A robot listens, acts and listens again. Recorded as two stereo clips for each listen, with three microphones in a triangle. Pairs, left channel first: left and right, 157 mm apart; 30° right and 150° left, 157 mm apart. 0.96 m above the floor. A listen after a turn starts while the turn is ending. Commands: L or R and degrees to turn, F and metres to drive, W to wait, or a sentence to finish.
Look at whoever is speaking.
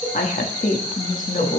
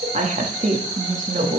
L115
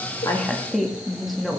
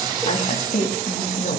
Facing the woman speaking, 1 to 2 m away.